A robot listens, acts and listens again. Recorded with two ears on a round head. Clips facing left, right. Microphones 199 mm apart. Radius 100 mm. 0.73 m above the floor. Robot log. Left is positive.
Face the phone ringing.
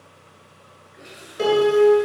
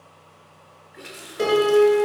cmd idle
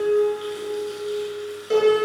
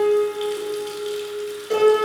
cmd idle
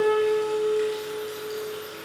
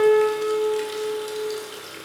end: I can't make out a phone ringing to turn to.